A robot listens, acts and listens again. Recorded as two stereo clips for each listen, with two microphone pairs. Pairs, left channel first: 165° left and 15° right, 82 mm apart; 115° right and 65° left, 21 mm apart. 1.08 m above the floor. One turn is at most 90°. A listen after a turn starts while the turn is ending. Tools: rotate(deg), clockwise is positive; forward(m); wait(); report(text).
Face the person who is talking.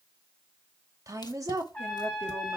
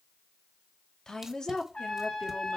rotate(55)
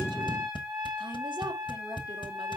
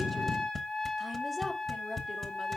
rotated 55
wait()
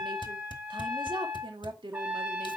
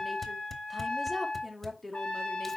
rotate(20)
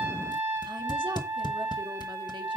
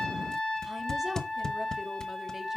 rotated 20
wait()
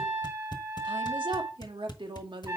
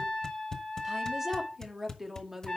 report("Facing the woman speaking.")